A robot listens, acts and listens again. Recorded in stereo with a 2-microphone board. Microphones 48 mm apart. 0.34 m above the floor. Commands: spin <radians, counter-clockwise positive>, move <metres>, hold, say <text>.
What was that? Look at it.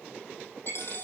spin 0.96
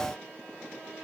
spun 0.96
hold
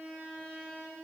say I heard a dropped coin, but can't make it out now. It was about straight ahead or 70° left.